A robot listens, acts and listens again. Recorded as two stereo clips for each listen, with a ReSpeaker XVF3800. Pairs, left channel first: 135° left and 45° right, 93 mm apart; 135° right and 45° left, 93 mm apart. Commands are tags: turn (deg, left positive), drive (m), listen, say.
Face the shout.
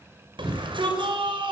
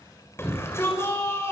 <turn deg="-75"/>
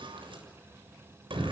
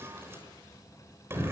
<turn deg="-20"/>
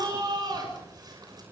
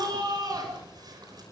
<say>Facing the shout.</say>